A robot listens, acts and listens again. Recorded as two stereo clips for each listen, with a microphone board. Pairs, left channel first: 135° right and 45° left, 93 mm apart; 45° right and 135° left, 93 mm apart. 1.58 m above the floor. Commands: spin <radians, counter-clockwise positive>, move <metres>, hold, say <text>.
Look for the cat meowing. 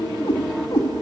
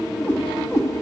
spin -1.75
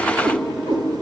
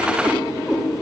spin 0.87
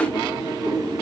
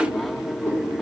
hold
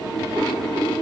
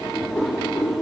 spin 0.44
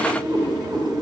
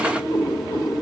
say Found it: a cat meowing, straight ahead, 2 to 4 m away.